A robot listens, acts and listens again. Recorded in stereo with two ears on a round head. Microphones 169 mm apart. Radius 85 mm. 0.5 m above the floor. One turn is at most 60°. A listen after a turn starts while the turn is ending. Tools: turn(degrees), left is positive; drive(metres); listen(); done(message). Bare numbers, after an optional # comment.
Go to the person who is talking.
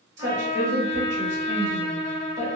# The woman speaking: about 40° right or 140° right.
turn(-40)
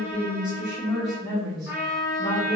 drive(1.0)
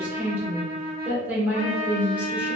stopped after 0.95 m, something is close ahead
# The woman speaking is now 15° right.
turn(-15)
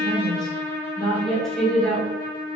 done("I am next to the woman speaking.")